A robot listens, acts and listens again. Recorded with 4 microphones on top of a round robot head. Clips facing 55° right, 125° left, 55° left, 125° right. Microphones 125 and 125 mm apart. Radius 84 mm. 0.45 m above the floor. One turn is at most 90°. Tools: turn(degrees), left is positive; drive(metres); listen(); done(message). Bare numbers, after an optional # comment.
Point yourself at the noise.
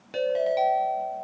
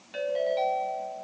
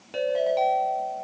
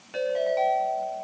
# The ringtone: 10° right.
turn(-10)
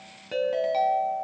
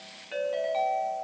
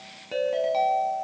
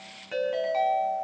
done("Facing the ringtone.")